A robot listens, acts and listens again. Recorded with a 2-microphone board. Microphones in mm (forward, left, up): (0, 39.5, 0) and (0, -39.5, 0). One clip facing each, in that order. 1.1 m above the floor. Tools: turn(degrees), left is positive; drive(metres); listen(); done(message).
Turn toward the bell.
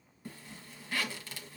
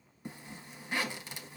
listen()
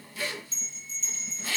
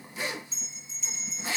turn(degrees=-30)
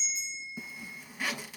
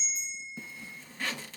turn(degrees=-140)
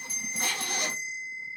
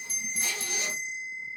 turn(degrees=-40)
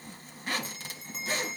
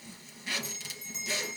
turn(degrees=-20)
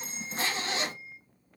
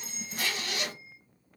turn(degrees=-10)
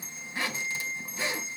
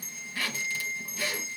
done("Facing the bell, 1 to 2 m away.")